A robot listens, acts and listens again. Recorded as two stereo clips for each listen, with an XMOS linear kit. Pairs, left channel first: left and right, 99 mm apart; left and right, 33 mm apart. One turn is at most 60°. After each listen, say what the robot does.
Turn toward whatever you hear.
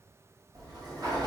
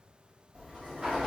Turn 45° right.
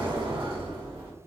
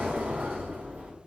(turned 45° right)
Turn 60° right.
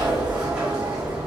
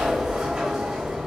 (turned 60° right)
Turn 10° right.
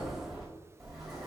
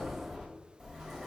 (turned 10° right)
Facing the sliding door, 1 to 2 m away.